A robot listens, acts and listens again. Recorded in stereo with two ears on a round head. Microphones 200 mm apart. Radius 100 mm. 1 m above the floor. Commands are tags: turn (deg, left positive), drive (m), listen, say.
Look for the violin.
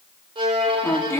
<turn deg="-20"/>
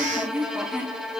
<say>Facing the violin, 1 to 2 m away.</say>